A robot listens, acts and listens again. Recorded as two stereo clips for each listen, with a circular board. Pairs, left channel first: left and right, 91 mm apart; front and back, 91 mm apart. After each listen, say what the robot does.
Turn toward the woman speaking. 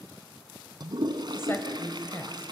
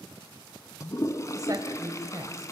Turn 150° left.
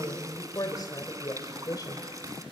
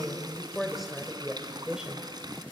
Turn 105° left.
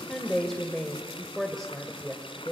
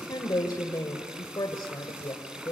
Found it: a woman speaking, straight ahead, 1 to 2 m away.